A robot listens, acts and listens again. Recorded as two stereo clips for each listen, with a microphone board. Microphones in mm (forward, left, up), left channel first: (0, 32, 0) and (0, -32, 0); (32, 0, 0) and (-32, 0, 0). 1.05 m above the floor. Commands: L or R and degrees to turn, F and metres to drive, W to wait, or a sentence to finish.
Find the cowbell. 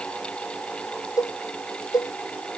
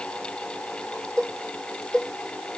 L80
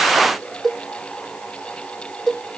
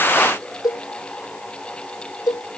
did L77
Found it: a cowbell, straight ahead.